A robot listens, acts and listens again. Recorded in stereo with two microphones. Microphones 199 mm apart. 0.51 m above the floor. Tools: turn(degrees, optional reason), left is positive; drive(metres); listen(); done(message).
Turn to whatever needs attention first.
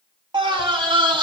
turn(degrees=-25, reason="The scream: about 25° right or 155° right.")
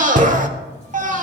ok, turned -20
turn(degrees=-130, reason="So it is at 130° right.")
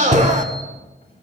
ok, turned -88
turn(degrees=-45, reason="The scream is now 45° right.")
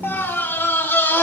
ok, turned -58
turn(degrees=15, reason="The scream is now 15° left.")
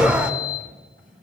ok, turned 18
done("Facing the scream, 1 to 2 m away.")